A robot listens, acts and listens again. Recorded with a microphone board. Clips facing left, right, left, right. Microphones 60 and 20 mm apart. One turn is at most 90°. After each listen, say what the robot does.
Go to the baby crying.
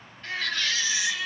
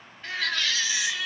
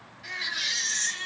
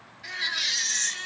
Turn 30° right.
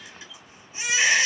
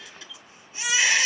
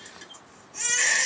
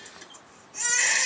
Turn 20° left.
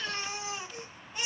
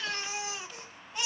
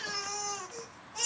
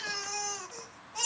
Drive 1.0 m forward.
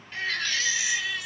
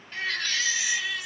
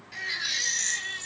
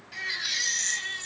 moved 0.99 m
Drive 1.0 m forward.
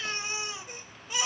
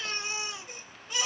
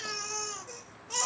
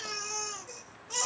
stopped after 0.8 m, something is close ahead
Turn 10° left.
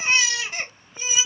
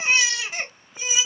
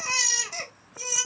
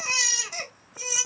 Arrived at the baby crying, straight ahead.